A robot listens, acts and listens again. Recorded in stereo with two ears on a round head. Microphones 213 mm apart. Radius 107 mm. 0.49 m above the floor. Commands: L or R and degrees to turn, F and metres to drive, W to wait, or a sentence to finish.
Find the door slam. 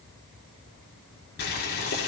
W
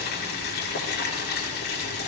W
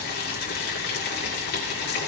I can't make out a door slam to turn to.